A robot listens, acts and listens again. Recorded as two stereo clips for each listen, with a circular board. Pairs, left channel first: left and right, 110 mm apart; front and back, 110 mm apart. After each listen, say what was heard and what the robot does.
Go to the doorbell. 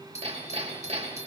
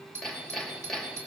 The doorbell: 110° left. Turn 110° left.
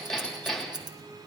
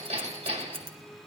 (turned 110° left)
Keep listening.
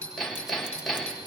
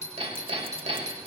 The doorbell is now 10° left. Turn 10° left.
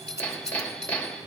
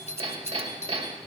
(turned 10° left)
Drive 1.0 m forward.
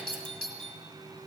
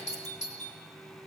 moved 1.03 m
Drive 1.0 m forward.
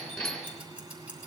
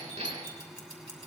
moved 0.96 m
Keep listening.
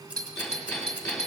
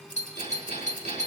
Drive 1.0 m forward.
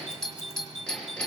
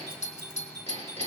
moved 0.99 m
Drive 1.0 m forward.
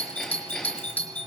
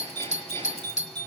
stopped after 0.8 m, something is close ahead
The doorbell is now 15° left. Turn 15° left.
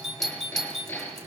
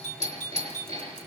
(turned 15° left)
I am next to the doorbell.